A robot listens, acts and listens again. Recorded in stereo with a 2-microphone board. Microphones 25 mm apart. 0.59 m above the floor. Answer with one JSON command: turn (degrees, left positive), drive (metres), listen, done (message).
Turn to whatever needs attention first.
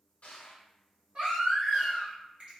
{"turn": -50}
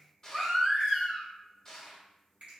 {"turn": -10}
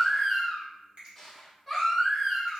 {"done": "Facing the baby crying, 1 to 2 m away."}